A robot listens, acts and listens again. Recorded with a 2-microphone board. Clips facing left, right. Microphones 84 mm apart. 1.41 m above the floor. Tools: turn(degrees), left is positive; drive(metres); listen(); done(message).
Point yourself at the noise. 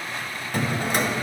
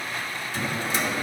turn(degrees=55)
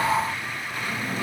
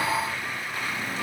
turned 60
turn(degrees=50)
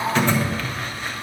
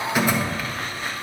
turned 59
turn(degrees=-10)
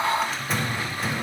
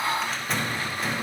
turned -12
done("Found it: a drawer, straight ahead.")